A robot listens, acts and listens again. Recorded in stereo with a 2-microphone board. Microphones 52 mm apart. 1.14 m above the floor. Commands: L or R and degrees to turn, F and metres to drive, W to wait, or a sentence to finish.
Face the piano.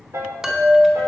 R65
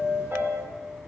W
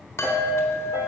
W
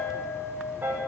R45
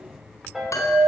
Facing the piano.